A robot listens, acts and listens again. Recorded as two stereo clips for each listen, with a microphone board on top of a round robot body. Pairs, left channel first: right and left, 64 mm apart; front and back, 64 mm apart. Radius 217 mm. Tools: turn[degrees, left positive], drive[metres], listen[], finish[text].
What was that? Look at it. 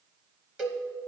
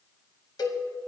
Thought: The cowbell: 15° left.
Action: turn[15]
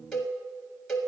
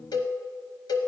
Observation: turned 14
Action: finish[Found it: a cowbell, straight ahead, under 1 m away.]